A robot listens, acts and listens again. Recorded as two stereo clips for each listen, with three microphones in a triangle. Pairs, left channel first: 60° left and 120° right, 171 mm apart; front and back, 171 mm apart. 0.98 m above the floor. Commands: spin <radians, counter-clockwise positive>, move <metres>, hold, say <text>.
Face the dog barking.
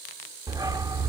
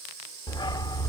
spin -0.96
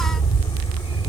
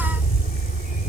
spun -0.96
spin 0.17
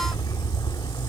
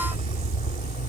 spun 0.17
say Facing the dog barking.